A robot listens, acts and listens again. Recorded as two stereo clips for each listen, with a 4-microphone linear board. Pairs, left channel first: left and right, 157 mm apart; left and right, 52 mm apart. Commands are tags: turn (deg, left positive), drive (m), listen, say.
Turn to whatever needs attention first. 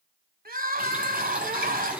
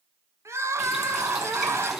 <turn deg="-65"/>
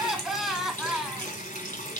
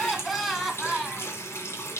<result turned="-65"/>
<say>Found it: crying, straight ahead, under 1 m away.</say>